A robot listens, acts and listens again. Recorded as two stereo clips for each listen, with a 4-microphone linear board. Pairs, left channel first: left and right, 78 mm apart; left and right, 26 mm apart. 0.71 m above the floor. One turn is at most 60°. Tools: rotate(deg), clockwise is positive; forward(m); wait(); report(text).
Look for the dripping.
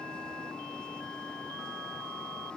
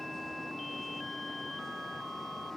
wait()
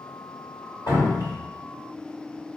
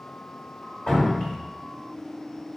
rotate(-55)
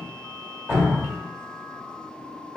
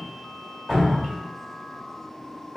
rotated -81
rotate(25)
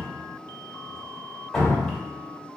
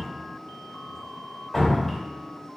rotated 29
report("Found it: dripping, straight ahead.")